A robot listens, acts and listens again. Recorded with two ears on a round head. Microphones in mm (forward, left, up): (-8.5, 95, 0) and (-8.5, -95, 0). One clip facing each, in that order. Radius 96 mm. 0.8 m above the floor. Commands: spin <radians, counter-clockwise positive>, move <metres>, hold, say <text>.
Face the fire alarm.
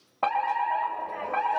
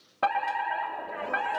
spin -0.52
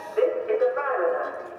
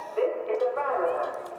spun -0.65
spin 0.35
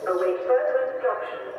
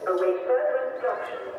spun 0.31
say Facing the fire alarm, 2 to 4 m away.